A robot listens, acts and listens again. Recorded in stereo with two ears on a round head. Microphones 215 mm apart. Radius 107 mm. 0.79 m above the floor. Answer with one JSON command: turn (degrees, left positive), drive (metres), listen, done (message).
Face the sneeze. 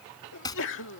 {"turn": 55}
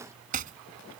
{"listen": true}
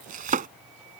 {"done": "I heard a sneeze, but can't make it out now. It was about straight ahead or 70° left."}